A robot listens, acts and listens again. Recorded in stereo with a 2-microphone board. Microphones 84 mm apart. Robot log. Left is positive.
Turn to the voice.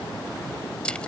cmd idle
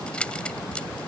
cmd idle
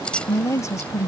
note: The woman speaking: about 35° left or 145° left.
cmd yaw +35
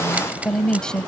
note: So it is at 10° left.
cmd yaw +10
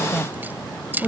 end: Found it: a woman speaking, straight ahead.